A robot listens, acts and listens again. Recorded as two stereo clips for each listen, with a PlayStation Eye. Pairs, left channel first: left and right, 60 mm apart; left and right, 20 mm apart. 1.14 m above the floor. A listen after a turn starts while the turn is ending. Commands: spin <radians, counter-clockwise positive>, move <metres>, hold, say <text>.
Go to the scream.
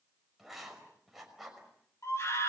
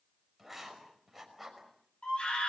spin 0.96
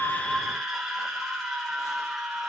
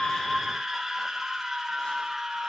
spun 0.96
move 1.0
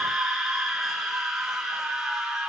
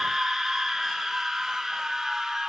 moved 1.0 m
move 1.0
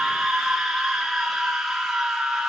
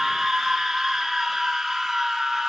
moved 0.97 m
move 1.0
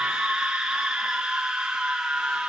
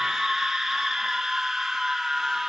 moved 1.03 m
spin -0.17
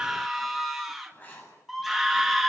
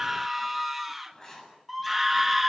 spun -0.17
move 1.0
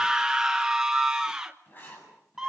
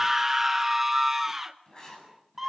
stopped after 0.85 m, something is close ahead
spin -0.17
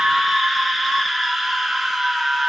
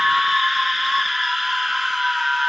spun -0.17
say I am next to the scream.